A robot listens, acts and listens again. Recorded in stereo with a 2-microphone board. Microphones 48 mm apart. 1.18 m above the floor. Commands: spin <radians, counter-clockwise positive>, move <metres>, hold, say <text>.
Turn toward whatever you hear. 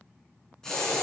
spin 0.52
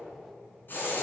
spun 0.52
spin 2.44
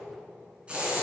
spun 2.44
spin -0.44
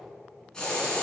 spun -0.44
spin 0.35
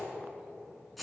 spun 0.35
say Facing the hiss, 2 to 4 m away.